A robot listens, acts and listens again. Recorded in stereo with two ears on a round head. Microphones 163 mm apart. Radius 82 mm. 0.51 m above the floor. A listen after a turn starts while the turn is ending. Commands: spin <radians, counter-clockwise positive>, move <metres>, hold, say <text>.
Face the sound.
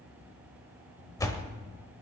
spin 0.26
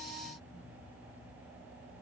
hold
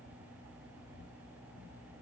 say I heard a door slam, but can't make it out now. It was about straight ahead or 150° left.